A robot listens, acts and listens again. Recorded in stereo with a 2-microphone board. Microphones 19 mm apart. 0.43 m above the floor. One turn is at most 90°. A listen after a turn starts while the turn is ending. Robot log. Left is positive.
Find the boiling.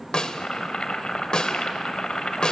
note: The boiling: about 55° left or 125° left.
cmd yaw +55
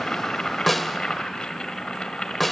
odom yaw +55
note: So it is at 60° left.
cmd yaw +60
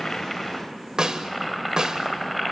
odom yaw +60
end: Facing the boiling.